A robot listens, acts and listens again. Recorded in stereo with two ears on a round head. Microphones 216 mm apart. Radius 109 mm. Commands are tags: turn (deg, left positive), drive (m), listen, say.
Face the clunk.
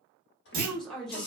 <turn deg="-35"/>
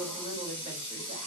<listen/>
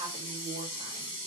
<say>I heard a clunk, but can't make it out now. It was about straight ahead or 110° right.</say>